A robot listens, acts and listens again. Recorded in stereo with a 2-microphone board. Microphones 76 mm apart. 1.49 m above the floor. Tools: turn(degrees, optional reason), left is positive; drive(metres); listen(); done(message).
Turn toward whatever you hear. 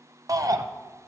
turn(degrees=-50, reason="The shout: about 50° right or 130° right.")
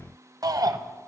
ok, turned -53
turn(degrees=-70, reason="So it is at 70° right.")
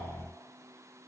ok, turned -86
turn(degrees=20, reason="Nothing new. It was at 20° left.")
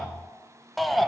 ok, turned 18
done("Found it: a shout, straight ahead.")